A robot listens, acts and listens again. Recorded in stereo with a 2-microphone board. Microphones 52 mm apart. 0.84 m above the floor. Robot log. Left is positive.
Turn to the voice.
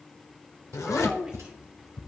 note: The child speaking: about 15° right or 165° right.
cmd yaw -15
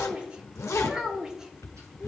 cmd yaw -30
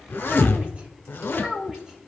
cmd yaw -30
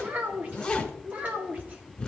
note: So it is at 150° right.
cmd yaw -150
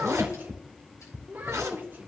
note: The child speaking is now 35° right.
cmd yaw -35
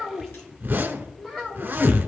end: Facing the child speaking.